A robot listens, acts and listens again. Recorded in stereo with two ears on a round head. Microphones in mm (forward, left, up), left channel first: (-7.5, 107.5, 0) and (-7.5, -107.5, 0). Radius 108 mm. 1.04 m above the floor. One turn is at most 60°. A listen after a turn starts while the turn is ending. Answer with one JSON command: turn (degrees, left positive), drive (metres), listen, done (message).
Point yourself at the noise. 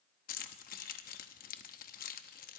{"turn": 40}
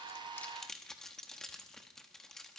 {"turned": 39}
{"done": "Found it: keys jangling, straight ahead."}